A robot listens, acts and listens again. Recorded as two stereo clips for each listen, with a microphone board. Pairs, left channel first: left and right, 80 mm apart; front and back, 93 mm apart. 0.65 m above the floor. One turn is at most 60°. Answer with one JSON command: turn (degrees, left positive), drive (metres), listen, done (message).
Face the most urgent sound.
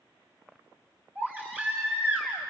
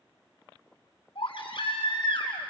{"turn": -25}
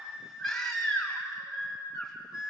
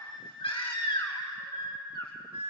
{"done": "Facing the baby crying, 2 to 4 m away."}